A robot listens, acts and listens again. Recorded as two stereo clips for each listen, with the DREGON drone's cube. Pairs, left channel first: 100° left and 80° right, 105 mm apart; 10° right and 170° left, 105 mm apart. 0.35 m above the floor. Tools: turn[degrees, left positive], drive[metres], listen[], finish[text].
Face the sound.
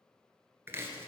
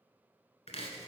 Thought: The chopping: 10° right.
Action: turn[-10]
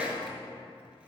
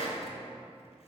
Action: finish[Facing the chopping.]